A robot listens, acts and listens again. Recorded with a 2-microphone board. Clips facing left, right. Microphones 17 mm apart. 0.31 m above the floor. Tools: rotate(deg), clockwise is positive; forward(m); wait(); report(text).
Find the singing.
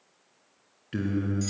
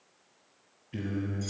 rotate(-65)
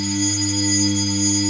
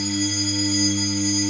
rotate(10)
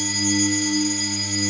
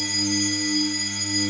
rotate(10)
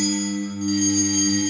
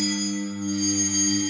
report("Found it: singing, straight ahead, over 4 m away.")